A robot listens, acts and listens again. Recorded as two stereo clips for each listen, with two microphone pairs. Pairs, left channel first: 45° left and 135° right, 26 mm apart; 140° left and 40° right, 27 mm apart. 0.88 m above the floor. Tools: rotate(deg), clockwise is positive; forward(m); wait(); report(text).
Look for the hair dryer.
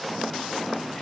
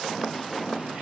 wait()
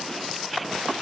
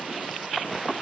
wait()
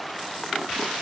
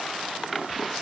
report("I can't make out a hair dryer.")